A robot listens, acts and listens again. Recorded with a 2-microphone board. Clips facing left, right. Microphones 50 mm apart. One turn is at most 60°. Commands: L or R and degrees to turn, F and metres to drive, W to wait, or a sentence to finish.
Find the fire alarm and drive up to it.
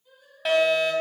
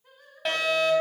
L30
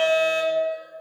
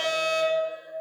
L60
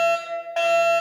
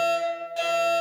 L60
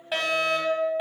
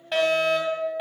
F1.0
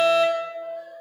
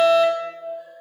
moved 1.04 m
L10
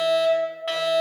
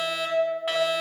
F1.0
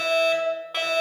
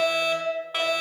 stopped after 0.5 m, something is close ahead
Arrived at the fire alarm, straight ahead.